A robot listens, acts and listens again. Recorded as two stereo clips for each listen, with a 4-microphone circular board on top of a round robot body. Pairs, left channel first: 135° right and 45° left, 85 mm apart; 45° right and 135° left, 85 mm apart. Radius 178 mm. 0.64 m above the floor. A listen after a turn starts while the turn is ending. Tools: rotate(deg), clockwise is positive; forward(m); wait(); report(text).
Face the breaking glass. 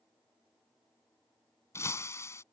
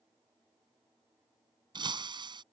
rotate(-165)
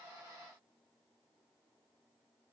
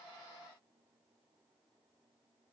report("I heard breaking glass from this way, but can't make it out now.")